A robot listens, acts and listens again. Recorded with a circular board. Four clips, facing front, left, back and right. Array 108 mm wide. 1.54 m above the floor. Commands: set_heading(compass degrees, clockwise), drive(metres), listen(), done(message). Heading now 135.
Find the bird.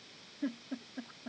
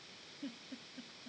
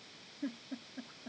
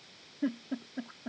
listen()
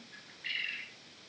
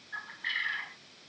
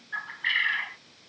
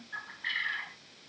set_heading(315)
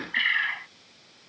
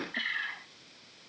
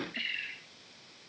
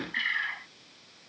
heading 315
set_heading(325)
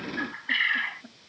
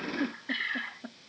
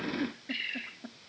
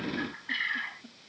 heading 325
done("Found it: a bird, straight ahead.")